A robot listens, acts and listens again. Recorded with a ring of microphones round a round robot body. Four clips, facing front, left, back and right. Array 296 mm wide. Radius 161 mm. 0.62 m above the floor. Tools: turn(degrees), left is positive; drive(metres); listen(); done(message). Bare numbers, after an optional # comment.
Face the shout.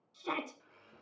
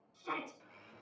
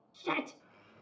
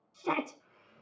# The shout: 105° right.
turn(-105)
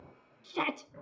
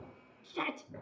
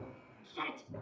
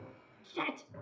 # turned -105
done("Facing the shout.")